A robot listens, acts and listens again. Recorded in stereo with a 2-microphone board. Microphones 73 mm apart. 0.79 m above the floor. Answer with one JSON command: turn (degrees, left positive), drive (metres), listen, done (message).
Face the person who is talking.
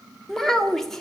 {"turn": 30}
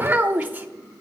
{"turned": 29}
{"turn": -20}
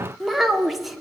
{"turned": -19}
{"done": "Found it: a child speaking, straight ahead, 1 to 2 m away."}